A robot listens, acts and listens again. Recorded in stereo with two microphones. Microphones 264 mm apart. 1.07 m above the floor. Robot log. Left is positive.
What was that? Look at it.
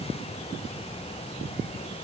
cmd idle
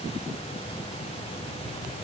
cmd idle
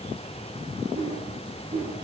note: The whoosh: about 20° right or 160° right.
cmd yaw -20
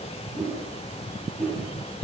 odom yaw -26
end: Facing the whoosh, 2 to 4 m away.